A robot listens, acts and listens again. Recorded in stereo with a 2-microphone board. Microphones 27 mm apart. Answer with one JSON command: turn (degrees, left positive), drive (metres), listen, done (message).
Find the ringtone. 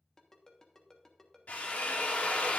{"turn": 20}
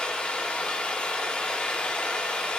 {"listen": true}
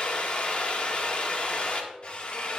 {"listen": true}
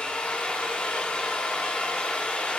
{"done": "I heard a ringtone, but can't make it out now. It was about straight ahead or 140° left."}